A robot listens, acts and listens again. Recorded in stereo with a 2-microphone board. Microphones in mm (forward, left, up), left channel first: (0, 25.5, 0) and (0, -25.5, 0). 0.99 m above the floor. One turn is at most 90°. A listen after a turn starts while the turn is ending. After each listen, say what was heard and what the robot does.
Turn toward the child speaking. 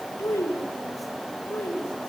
Turn 90° left.
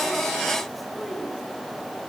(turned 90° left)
Keep listening.
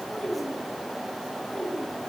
The child speaking is now 20° left. Turn 20° left.
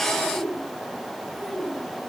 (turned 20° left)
Found it: a child speaking, straight ahead, over 4 m away.